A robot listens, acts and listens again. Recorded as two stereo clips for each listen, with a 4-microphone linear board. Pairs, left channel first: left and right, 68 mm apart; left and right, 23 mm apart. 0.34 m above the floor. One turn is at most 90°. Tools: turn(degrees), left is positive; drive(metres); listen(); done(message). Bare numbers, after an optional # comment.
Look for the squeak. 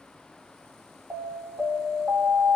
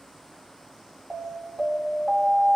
listen()
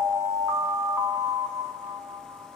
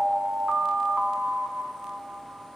listen()
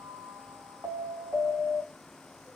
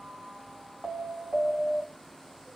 done("I can't make out a squeak to turn to.")